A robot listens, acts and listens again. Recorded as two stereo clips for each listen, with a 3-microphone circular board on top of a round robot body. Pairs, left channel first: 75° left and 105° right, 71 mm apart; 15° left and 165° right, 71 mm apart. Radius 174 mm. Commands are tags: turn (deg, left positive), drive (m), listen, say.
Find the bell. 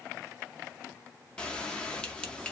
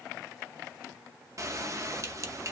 <turn deg="150"/>
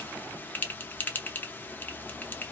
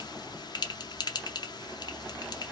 <turn deg="10"/>
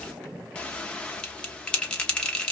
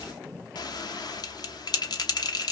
<say>Facing the bell, under 1 m away.</say>